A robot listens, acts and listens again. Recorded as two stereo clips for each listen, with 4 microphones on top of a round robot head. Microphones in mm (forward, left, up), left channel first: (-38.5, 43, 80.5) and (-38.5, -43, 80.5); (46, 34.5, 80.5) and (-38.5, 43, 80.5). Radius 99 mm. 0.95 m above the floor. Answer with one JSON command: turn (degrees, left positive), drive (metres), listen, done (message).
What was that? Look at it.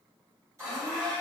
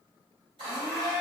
{"turn": -145}
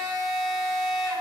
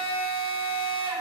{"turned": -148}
{"done": "Facing the blender, 1 to 2 m away."}